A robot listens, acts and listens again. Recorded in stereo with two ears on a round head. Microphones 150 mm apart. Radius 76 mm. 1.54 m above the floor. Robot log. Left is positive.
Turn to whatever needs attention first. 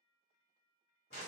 cmd idle
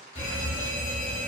note: The fire alarm: about 30° left or 150° left.
cmd yaw +30
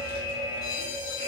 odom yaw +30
note: So it is at 115° left.
cmd yaw +115
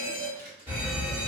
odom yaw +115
note: The fire alarm is now 15° right.
cmd yaw -15
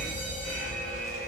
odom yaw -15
end: Facing the fire alarm.